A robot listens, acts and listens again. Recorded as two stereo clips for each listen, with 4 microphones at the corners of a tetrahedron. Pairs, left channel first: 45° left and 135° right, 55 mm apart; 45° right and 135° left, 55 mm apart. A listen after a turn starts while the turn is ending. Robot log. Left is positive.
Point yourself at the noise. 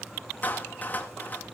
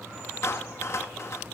note: The clap: 10° right.
cmd yaw -10
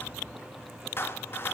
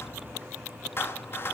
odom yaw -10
end: Found it: a clap, straight ahead.